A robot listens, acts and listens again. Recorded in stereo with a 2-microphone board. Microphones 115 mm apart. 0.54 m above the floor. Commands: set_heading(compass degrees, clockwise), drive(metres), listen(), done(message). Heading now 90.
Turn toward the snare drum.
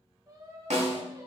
set_heading(180)
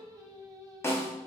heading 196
set_heading(171)
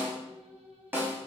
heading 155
set_heading(170)
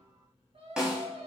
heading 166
done("Found it: a snare drum, straight ahead.")